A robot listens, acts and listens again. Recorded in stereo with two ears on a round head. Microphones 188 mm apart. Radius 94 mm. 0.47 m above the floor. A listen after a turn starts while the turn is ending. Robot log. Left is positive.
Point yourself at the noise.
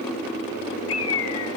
note: The bird: about 70° left or 110° left.
cmd yaw +70
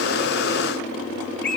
end: Found it: a bird, straight ahead, 1 to 2 m away.